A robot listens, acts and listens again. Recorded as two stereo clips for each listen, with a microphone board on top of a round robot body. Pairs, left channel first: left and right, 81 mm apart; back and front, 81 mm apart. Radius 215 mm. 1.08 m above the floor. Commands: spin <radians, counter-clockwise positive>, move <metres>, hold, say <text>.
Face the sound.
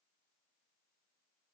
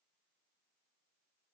hold
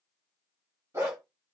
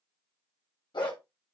spin -2.62
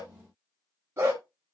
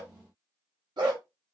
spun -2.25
spin -0.61
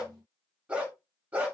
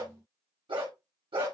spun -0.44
spin -0.35
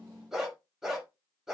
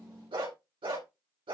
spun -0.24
say Found it: a dog barking, straight ahead, 2 to 4 m away.